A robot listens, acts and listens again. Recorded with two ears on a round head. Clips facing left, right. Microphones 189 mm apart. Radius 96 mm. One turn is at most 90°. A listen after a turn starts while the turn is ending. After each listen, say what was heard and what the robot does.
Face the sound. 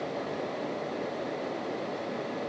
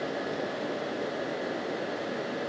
Keep listening.
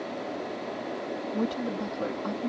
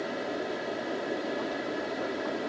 The woman speaking: about 65° left or 115° left. Turn 65° left.
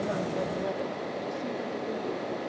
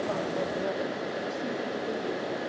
Keep listening.
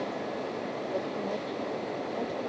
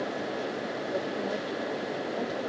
Keep listening.
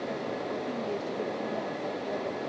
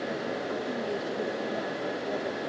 I heard a woman speaking, but can't make it out now. It was about straight ahead or 50° left.